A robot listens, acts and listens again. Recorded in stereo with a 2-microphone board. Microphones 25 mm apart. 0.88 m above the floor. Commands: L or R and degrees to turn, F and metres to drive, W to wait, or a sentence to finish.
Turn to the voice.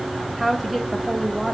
L30
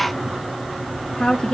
L120
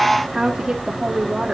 R30
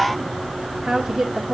R15
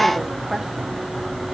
W
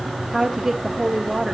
Found it: a woman speaking, straight ahead.